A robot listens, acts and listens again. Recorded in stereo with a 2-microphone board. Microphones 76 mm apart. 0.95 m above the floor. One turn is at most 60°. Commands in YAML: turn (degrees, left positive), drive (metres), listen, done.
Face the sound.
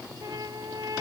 turn: -50
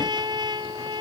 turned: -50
turn: -60
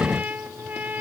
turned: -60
turn: -25
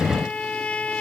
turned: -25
turn: 15
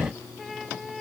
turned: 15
done: "Found it: a trumpet, straight ahead."